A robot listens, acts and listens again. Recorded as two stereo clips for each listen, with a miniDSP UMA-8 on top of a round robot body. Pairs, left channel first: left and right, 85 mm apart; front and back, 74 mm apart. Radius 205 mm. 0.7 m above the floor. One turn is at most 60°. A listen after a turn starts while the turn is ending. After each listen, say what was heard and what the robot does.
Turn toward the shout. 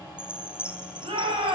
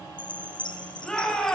The shout: 80° right. Turn 60° right.
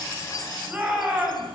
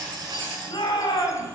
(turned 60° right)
The shout is now 20° right. Turn 20° right.
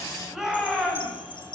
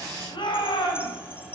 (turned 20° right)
Facing the shout, over 4 m away.